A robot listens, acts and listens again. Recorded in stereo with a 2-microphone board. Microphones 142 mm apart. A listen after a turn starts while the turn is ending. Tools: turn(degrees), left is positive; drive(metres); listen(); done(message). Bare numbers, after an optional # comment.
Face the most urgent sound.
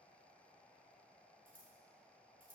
listen()
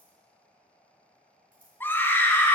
turn(30)
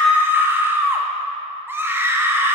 # So it is at 15° right.
turn(-15)
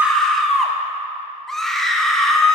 done("Facing the scream.")